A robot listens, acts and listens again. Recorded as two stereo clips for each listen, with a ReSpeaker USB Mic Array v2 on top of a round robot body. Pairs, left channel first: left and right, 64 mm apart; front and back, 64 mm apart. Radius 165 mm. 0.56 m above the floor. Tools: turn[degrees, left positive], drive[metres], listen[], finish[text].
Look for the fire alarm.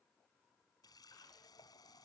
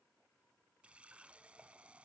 Action: listen[]
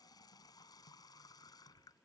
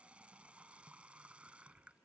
Action: listen[]
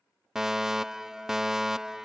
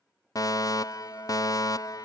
Action: finish[Facing the fire alarm.]